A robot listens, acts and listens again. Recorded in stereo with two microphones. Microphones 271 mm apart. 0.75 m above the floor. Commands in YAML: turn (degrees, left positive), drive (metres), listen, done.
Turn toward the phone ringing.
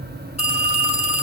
turn: 25
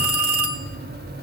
turn: 130
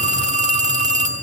turn: -25
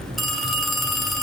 done: "Found it: a phone ringing, straight ahead, 1 to 2 m away."